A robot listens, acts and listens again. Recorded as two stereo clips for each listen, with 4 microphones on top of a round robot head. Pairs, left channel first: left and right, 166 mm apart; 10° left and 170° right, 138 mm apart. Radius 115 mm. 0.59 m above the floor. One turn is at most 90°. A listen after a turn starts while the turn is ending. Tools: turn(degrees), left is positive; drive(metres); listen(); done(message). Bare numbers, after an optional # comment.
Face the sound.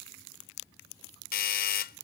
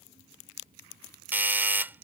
# The doorbell: 115° left.
turn(90)
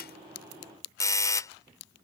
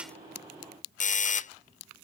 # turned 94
# The doorbell is now 20° left.
turn(20)
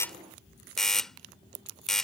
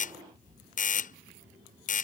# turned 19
done("Facing the doorbell.")